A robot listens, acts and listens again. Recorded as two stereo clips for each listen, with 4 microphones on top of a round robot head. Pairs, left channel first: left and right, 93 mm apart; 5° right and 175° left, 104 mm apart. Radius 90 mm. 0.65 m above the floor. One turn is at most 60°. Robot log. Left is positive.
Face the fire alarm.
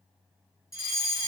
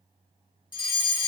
note: The fire alarm: 40° left.
cmd yaw +40
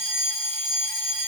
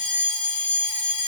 end: Facing the fire alarm.